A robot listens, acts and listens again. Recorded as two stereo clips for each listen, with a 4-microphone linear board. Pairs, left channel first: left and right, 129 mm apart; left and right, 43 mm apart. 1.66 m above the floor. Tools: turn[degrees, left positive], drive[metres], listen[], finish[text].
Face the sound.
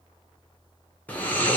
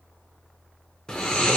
Action: turn[30]
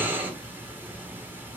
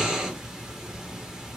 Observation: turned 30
Thought: So it is at 15° right.
Action: turn[-15]
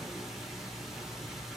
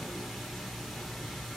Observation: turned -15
Action: finish[Facing the snoring, under 1 m away.]